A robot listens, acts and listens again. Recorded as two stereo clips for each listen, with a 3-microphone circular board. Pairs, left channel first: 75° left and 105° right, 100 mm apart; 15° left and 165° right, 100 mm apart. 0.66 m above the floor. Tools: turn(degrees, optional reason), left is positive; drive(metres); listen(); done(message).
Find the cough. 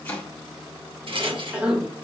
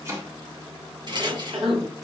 turn(degrees=180, reason="The cough: straight behind.")
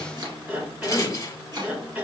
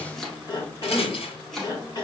turn(degrees=-30, reason="The cough is now 30° right.")
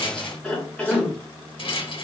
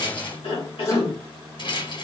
done("Facing the cough.")